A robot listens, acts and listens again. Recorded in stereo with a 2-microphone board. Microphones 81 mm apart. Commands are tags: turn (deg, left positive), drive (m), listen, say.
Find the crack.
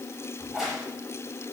<turn deg="30"/>
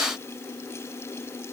<listen/>
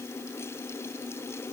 <say>I heard a crack, but can't make it out now. It was about 30° right or 150° left.</say>